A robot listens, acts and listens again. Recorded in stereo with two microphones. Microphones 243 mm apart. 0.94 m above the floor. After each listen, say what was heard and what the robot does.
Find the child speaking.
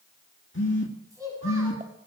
Turn 30° right.
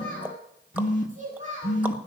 So it is at 150° right. Turn 150° right.
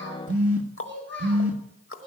The child speaking is now 55° right. Turn 55° right.
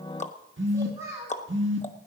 The child speaking is now 10° right. Turn 10° right.
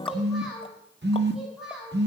Found it: a child speaking, straight ahead, over 4 m away.